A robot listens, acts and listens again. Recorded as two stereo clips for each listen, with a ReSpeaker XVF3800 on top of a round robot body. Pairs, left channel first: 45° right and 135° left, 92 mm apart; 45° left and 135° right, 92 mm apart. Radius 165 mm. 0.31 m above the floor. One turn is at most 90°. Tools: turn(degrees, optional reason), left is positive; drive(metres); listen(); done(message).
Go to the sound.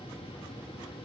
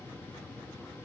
listen()
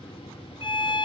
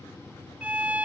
turn(degrees=-60, reason="The violin: 60° right.")
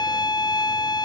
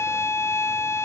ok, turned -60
turn(degrees=-10, reason="The violin is now 10° right.")
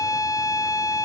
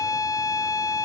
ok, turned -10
drive(metres=1.0)
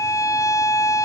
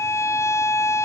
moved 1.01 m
drive(metres=1.0)
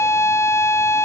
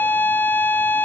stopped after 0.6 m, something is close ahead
turn(degrees=-10, reason="The violin is now 10° right.")
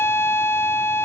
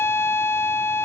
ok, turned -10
done("Arrived at the violin, straight ahead.")